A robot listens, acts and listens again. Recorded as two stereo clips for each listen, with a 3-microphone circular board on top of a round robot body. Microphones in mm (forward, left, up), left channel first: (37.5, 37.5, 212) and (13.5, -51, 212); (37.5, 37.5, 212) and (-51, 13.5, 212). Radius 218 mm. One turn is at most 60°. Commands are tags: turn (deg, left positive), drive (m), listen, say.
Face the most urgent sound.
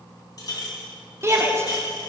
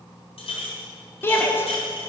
<turn deg="-45"/>
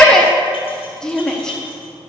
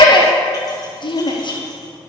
<turn deg="-10"/>
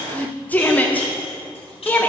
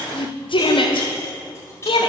<say>Facing the shout, 1 to 2 m away.</say>